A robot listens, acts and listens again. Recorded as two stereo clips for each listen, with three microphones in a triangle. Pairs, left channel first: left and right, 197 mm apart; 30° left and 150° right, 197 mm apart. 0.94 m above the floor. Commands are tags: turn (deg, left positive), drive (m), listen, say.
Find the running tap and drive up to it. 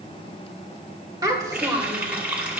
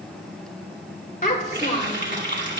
<turn deg="-175"/>
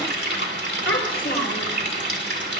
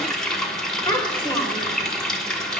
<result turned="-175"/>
<turn deg="-55"/>
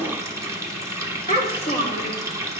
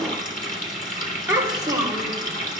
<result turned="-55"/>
<turn deg="-15"/>
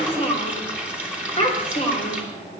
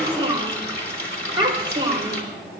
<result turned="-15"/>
<drive m="1.0"/>
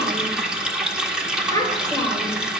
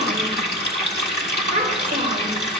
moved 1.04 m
<drive m="1.0"/>
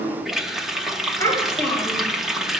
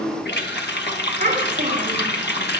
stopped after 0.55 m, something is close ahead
<say>I am next to the running tap.</say>